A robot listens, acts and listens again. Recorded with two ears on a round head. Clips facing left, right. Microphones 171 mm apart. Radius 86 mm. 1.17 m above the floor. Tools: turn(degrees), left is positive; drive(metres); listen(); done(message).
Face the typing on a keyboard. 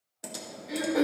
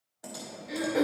turn(degrees=35)
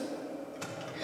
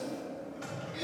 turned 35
turn(degrees=110)
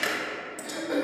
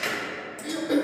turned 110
turn(degrees=10)
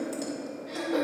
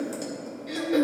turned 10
listen()
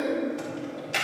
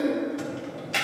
done("Found it: typing on a keyboard, straight ahead.")